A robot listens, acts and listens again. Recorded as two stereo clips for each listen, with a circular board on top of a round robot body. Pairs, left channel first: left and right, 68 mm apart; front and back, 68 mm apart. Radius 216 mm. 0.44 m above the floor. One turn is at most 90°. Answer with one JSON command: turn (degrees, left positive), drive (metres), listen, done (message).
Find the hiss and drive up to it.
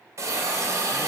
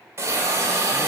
{"turn": -90}
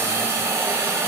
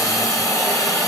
{"turn": -35}
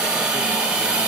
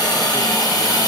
{"turn": -15}
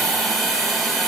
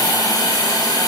{"drive": 1.0}
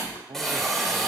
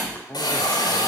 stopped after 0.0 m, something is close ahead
{"done": "Blocked. The hiss is further on, straight ahead."}